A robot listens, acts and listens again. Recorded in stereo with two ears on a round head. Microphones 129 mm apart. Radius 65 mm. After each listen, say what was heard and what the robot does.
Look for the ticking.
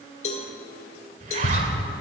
The ticking: about 65° left or 115° left. Turn 65° left.
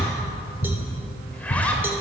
So it is at 40° left. Turn 40° left.
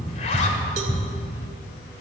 Facing the ticking.